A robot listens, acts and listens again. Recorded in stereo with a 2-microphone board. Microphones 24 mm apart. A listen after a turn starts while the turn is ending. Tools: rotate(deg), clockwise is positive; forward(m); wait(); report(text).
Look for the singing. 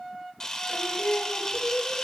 rotate(-55)
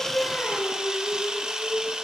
rotate(-75)
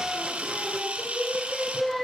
rotate(-15)
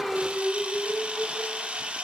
report("Facing the singing.")